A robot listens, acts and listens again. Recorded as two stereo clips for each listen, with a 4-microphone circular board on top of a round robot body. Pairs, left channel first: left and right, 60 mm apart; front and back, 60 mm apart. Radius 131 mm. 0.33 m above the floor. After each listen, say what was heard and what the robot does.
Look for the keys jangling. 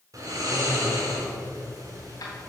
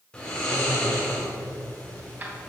The keys jangling: 120° left. Turn 120° left.
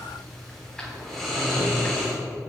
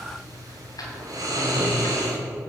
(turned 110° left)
The keys jangling is now 10° left. Turn 10° left.
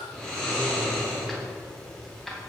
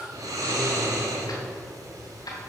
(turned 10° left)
Facing the keys jangling, 2 to 4 m away.